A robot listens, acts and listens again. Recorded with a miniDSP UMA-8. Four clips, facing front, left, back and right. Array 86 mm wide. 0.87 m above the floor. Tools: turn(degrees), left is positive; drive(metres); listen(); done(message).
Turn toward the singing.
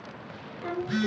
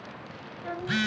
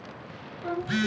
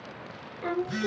turn(degrees=-80)
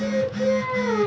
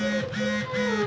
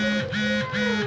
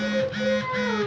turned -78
done("Found it: singing, straight ahead.")